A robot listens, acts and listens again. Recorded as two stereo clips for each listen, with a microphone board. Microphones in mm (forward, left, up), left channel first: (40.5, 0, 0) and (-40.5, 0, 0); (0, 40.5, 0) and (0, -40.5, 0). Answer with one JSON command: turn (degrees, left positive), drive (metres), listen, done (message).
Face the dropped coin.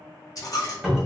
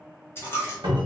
{"turn": 30}
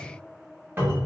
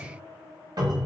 {"done": "I heard a dropped coin from this way, but can't make it out now."}